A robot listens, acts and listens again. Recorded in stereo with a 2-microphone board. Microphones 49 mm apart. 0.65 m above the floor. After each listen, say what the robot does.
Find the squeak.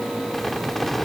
Turn 30° left.
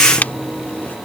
Turn 145° left.
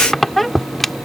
Facing the squeak.